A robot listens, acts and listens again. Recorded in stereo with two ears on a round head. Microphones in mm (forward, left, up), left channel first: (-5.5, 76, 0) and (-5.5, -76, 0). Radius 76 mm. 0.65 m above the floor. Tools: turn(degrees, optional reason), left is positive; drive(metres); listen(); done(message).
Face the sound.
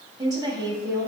turn(degrees=-20, reason="The woman speaking: about 20° right or 160° right.")
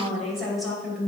done("Found it: a woman speaking, straight ahead, 2 to 4 m away.")